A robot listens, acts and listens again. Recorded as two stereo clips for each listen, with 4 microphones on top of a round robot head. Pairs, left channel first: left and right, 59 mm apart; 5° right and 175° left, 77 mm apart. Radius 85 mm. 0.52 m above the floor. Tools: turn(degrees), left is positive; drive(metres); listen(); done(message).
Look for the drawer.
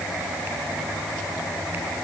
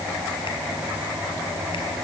listen()
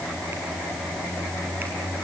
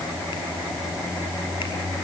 listen()
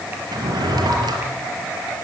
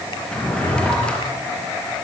turn(degrees=-85)
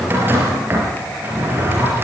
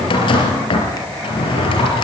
turn(degrees=-25)
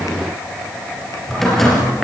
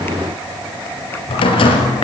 done("Facing the drawer, over 4 m away.")